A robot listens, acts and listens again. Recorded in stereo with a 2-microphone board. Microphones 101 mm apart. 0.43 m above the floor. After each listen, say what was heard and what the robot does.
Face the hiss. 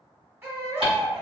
The hiss: about 70° right or 110° right. Turn 70° right.
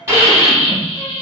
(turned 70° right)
So it is at 30° right. Turn 30° right.
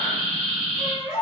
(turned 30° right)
Found it: a hiss, straight ahead.